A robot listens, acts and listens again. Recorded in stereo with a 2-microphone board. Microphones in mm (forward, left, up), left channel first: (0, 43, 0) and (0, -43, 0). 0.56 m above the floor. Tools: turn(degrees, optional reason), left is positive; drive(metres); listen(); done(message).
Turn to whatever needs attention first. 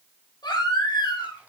turn(degrees=55, reason="The baby crying: about 55° left or 125° left.")
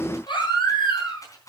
turn(degrees=65, reason="So it is at 65° left.")
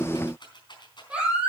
turn(degrees=-10, reason="The baby crying is now 10° right.")
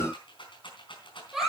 done("Facing the baby crying, over 4 m away.")